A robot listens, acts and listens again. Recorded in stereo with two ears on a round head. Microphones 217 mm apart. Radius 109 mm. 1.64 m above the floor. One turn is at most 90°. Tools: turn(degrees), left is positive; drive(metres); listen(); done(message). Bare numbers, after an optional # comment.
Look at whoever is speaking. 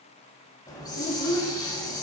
# The child speaking: about 30° left or 150° left.
turn(30)
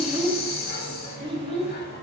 # So it is at 25° right.
turn(-25)
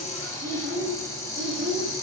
# The child speaking is now 50° right.
turn(-50)
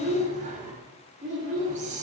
# The child speaking is now 30° right.
turn(-30)
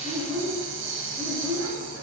done("Found it: a child speaking, straight ahead.")